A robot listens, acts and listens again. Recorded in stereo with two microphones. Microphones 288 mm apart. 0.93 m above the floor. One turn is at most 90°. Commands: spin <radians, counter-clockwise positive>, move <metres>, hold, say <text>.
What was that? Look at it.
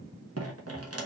spin -0.96
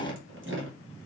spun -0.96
spin -0.96
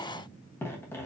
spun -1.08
spin 0.17
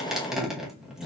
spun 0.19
say Facing the dripping.